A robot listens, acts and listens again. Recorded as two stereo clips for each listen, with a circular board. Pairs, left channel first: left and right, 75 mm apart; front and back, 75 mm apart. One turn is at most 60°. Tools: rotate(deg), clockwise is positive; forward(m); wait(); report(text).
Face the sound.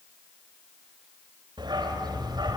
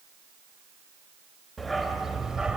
rotate(60)
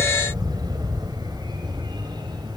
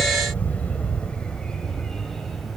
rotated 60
rotate(60)
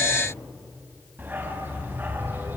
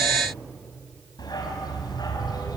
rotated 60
rotate(25)
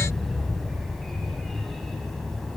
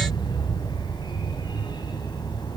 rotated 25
report("Facing the dog barking.")